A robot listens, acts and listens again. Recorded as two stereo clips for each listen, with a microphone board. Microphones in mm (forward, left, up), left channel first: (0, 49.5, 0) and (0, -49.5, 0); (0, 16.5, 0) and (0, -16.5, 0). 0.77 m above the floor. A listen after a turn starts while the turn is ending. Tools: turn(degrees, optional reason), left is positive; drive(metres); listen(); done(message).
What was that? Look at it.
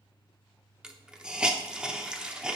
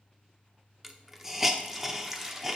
turn(degrees=-30)
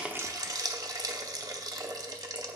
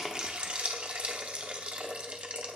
turn(degrees=-140, reason="So it is at 140° right.")
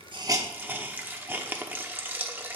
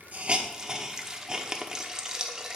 turn(degrees=-20, reason="The hiss is now 20° right.")
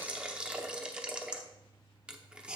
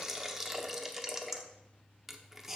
turn(degrees=-10, reason="The hiss is now 10° right.")
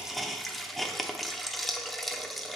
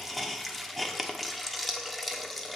done("Found it: a hiss, straight ahead, under 1 m away.")